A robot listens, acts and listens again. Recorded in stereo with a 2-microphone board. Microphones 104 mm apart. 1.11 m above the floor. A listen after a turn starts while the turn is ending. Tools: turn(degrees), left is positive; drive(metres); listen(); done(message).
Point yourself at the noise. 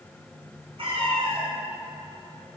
turn(degrees=-60)
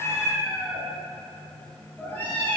turn(degrees=15)
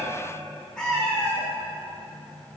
turn(degrees=10)
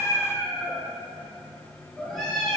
done("Found it: a cat meowing, straight ahead.")